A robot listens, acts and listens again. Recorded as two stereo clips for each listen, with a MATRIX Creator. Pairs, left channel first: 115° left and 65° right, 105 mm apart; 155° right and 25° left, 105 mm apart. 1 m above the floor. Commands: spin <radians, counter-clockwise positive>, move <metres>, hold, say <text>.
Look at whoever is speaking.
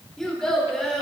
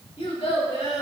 spin -2.79
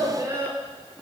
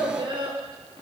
spin -0.17
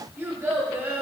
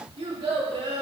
say Facing the child speaking, 2 to 4 m away.